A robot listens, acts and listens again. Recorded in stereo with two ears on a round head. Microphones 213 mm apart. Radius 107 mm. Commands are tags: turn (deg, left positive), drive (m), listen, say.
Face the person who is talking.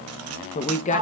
<turn deg="30"/>
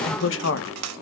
<turn deg="115"/>
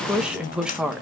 <say>Facing the woman speaking.</say>